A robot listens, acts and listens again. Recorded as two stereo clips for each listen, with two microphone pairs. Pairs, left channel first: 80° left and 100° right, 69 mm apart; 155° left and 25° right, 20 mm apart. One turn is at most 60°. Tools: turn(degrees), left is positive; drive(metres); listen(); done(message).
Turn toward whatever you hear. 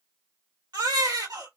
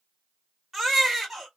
turn(degrees=-60)
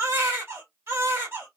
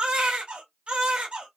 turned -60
turn(degrees=-45)
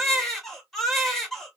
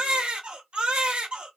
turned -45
done("Facing the baby crying.")